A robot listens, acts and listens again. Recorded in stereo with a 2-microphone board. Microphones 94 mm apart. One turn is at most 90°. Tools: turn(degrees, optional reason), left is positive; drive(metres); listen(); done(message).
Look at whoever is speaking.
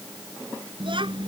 turn(degrees=-65, reason="The child speaking: about 65° right or 115° right.")
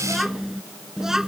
done("Found it: a child speaking, straight ahead.")